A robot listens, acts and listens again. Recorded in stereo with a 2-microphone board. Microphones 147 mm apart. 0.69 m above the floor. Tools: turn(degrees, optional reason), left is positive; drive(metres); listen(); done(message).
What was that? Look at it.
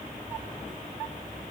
listen()
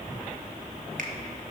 listen()
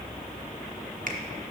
turn(degrees=-65, reason="The finger snap: about 65° right or 115° right.")
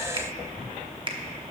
turn(degrees=-40, reason="So it is at 40° right.")
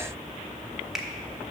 done("Facing the finger snap, under 1 m away.")